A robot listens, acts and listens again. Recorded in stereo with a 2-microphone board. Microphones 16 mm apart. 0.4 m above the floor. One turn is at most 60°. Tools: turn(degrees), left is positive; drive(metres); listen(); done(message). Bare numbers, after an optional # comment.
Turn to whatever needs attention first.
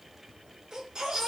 # The baby crying: about 40° right or 140° right.
turn(-40)
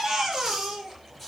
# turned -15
# So it is at 25° right.
turn(-25)
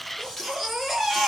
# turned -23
done("Found it: a baby crying, straight ahead, over 4 m away.")